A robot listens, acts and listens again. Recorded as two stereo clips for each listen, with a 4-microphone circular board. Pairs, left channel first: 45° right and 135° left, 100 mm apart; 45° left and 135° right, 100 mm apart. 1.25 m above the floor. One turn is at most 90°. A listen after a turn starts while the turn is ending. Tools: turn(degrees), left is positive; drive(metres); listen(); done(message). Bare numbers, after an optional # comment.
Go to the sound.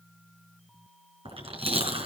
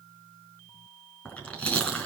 # The chewing: 120° left.
turn(90)
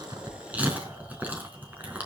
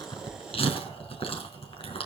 # The chewing is now 60° left.
turn(60)
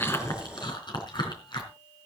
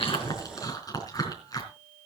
drive(1.0)
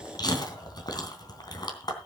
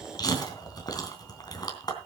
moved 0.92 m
drive(1.0)
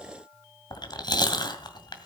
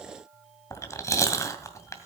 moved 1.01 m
# The chewing is now 10° right.
turn(-10)
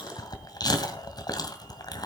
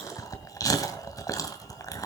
drive(1.0)
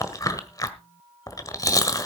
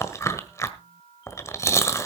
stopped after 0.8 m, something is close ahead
done("I am next to the chewing.")